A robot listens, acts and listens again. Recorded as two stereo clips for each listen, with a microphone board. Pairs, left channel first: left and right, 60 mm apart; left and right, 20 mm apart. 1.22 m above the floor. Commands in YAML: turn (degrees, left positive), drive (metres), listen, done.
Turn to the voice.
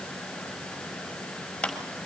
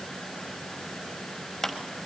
listen: true
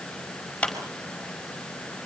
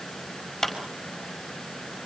listen: true
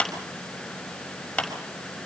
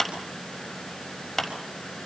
done: "I can't make out anyone speaking, only a clap."